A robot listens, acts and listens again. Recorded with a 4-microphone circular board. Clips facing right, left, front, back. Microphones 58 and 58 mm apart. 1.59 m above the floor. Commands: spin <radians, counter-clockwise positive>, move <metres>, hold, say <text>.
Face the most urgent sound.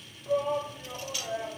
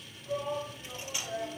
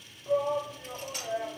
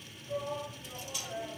spin -0.52
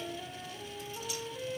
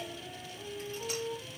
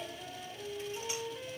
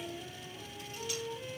hold
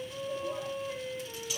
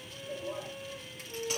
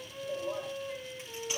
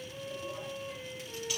hold
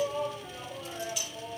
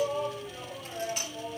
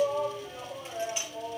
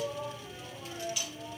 say Found it: a shout, straight ahead.